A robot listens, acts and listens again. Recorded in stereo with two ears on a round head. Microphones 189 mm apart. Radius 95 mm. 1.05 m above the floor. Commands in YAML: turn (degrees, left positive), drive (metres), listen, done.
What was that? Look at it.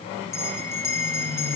turn: 30
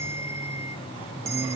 listen: true
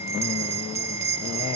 turn: -15
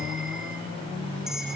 listen: true
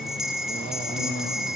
done: "Facing the bell."